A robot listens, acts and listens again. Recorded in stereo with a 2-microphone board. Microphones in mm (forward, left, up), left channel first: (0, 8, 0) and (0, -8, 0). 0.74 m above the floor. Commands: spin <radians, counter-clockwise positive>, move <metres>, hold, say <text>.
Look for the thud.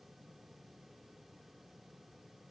hold
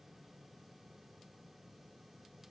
hold
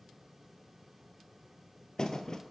spin 0.70
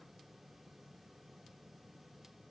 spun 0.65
hold
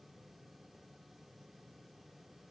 say I heard a thud, but can't make it out now. It was about 5° left or 105° left.